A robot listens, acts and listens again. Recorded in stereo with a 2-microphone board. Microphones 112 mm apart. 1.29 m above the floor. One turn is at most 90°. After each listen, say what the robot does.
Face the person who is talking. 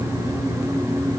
Keep listening.
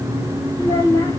Turn 30° left.
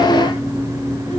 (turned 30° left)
Keep listening.
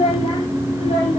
Turn 90° left.
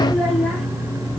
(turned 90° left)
Found it: a child speaking, straight ahead, over 4 m away.